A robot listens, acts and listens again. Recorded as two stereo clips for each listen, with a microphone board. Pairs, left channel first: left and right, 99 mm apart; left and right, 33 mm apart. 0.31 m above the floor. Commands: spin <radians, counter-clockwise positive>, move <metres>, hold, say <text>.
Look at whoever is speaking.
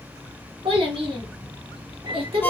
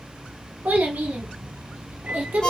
spin -1.22
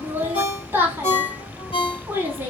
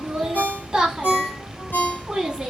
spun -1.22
spin -0.44
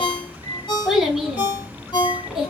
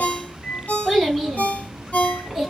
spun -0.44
say Found it: a child speaking, straight ahead, 1 to 2 m away.